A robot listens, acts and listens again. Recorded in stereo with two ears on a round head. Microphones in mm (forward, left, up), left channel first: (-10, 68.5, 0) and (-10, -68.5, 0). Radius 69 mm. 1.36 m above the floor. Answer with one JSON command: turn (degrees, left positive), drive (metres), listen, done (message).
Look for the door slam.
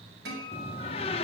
{"turn": 40}
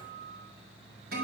{"listen": true}
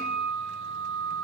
{"done": "I heard a door slam, but can't make it out now. It was about straight ahead or 100° left."}